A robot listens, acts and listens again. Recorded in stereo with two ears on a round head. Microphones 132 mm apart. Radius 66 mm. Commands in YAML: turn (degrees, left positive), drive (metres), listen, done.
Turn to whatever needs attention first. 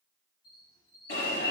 turn: 90
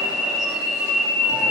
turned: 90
done: "Facing the alarm, over 4 m away."